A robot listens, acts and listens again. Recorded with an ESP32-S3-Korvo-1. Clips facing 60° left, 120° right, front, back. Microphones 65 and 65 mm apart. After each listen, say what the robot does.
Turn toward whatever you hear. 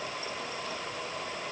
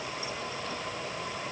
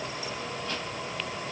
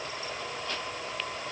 Keep listening.
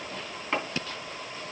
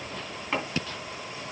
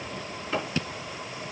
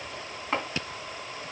Turn 150° left.
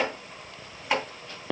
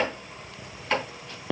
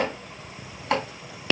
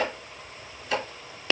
Turn 20° right.
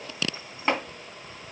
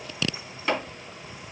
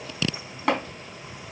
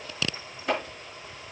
Facing the chopping, 2 to 4 m away.